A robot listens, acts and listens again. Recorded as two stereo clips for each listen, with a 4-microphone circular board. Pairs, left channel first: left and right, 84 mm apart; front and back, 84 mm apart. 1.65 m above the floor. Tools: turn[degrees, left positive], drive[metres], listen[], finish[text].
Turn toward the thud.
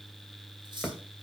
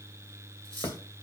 Action: finish[Facing the thud, 2 to 4 m away.]